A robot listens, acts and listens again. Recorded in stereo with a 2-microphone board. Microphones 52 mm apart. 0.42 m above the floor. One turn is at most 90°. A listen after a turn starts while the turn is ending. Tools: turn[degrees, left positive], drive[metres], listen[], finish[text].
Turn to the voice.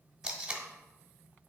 Action: listen[]
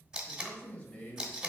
Thought: The man speaking: about 20° left or 160° left.
Action: turn[20]
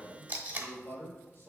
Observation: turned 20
Thought: So it is at 130° left.
Action: turn[90]
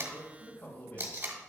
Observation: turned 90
Thought: The man speaking is now 50° left.
Action: turn[50]
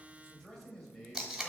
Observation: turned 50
Thought: The man speaking is now 15° left.
Action: turn[15]
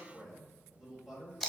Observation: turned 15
Action: finish[Found it: a man speaking, straight ahead, 2 to 4 m away.]